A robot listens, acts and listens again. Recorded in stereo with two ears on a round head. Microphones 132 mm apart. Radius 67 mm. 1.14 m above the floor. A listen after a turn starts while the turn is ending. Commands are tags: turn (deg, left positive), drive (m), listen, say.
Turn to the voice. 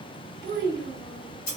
<turn deg="-70"/>
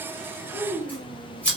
<say>Found it: a child speaking, straight ahead, under 1 m away.</say>